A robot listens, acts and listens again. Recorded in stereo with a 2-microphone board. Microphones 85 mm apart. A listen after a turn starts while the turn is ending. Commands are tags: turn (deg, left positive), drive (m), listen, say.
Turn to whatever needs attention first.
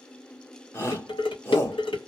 <turn deg="30"/>
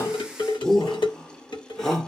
<say>Facing the shout.</say>